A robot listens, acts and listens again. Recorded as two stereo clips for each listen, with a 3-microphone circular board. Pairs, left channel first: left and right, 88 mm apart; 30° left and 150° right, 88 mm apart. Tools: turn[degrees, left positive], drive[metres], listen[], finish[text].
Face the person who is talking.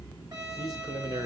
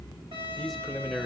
Thought: The man speaking: 55° right.
Action: turn[-55]
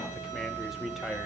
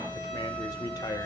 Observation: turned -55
Action: finish[Found it: a man speaking, straight ahead, 1 to 2 m away.]